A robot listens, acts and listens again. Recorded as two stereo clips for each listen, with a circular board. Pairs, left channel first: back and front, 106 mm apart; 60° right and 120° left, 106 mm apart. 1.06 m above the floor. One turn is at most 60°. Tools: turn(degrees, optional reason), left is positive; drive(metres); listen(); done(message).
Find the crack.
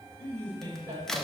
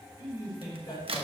turn(degrees=60, reason="The crack: 95° left.")
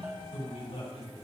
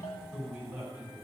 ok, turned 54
turn(degrees=40, reason="Nothing new. It was at 40° left.")
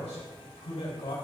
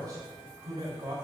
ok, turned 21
turn(degrees=20, reason="Nothing new. It was at 20° left.")
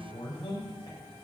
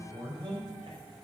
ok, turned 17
done("I heard a crack from this way, but can't make it out now.")